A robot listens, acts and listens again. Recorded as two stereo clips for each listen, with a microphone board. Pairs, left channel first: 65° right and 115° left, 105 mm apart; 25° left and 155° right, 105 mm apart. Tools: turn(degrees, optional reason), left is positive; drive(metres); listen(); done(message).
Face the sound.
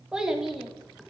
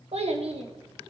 turn(degrees=-160, reason="The child speaking: 160° right.")
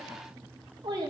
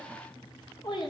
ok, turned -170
turn(degrees=65, reason="The child speaking is now 65° left.")
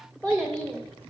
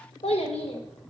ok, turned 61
turn(degrees=15, reason="The child speaking is now 15° left.")
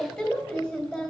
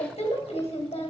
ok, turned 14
done("Found it: a child speaking, straight ahead.")